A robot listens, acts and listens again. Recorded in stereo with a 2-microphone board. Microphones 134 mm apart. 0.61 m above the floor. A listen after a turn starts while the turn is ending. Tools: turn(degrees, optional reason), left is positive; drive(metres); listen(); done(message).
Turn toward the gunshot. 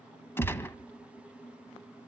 turn(degrees=15, reason="The gunshot: about 15° left or 165° left.")
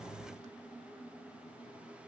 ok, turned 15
listen()
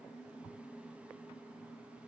done("I heard a gunshot, but can't make it out now. It was about straight ahead or 150° left.")